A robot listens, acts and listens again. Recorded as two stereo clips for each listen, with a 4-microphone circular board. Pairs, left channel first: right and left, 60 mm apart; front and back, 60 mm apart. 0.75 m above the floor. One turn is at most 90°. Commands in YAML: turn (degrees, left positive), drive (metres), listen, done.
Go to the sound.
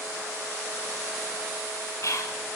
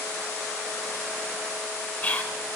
turn: -60
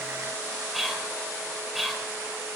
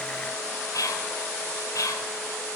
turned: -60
drive: 1.0
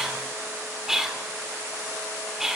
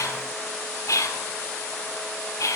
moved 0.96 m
turn: 10
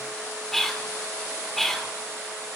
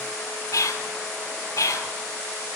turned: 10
drive: 1.0
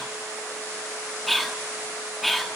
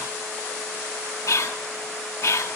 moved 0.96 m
drive: 1.0
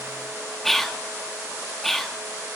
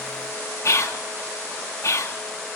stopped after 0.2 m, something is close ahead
done: "Arrived at the whispering, straight ahead."